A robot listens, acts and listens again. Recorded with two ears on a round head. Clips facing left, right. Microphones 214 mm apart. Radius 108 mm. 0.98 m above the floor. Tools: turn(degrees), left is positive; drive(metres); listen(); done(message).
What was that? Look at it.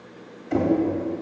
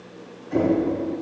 turn(degrees=90)
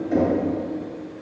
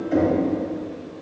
done("Facing the knocking, 2 to 4 m away.")